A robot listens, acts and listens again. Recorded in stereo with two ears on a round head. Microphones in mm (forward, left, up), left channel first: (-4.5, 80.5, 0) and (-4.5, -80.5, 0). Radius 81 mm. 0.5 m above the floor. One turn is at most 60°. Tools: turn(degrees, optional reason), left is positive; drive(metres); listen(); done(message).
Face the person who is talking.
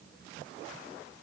listen()
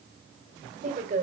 turn(degrees=-45, reason="The woman speaking: about 45° right or 135° right.")
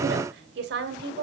turn(degrees=-60, reason="So it is at 80° right.")
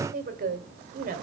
turn(degrees=-55, reason="The woman speaking is now 55° right.")
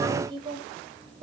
turn(degrees=-30, reason="The woman speaking is now 30° right.")
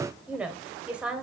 done("Found it: a woman speaking, straight ahead.")